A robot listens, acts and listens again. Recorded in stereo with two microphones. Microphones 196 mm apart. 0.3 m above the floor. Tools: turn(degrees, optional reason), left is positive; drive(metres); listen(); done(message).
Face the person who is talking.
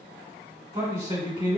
turn(degrees=-25, reason="The man speaking: about 25° right or 155° right.")
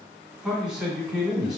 done("Facing the man speaking, 1 to 2 m away.")